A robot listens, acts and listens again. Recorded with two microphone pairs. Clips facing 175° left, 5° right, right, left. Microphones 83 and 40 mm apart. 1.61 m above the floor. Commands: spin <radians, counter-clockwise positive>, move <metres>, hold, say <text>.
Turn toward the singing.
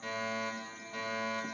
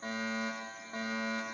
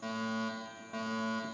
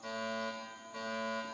hold
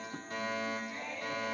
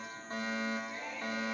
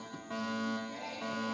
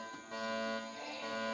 spin -1.57
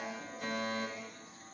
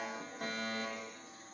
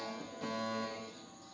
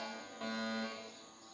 hold
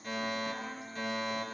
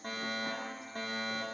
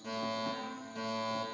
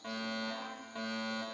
spin 0.44
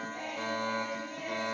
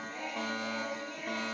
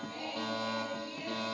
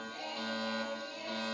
say Facing the singing, over 4 m away.